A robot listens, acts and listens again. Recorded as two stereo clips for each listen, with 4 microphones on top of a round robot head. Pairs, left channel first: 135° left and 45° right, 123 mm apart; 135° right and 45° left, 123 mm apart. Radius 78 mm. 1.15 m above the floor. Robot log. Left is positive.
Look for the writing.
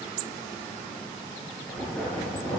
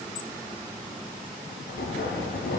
note: The writing: 145° right.
cmd yaw -145
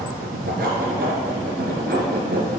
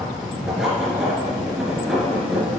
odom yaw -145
note: The writing is now 45° right.
cmd yaw -45
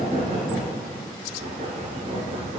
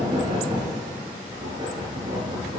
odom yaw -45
note: The writing is now 10° right.
cmd yaw -10
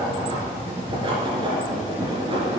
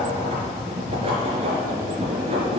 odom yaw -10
end: Facing the writing.